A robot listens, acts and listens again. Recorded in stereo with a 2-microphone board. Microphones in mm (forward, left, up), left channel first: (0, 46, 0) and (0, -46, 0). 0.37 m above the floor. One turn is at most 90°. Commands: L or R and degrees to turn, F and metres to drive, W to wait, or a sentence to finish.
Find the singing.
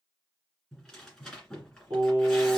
R35
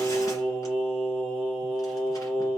Found it: singing, straight ahead.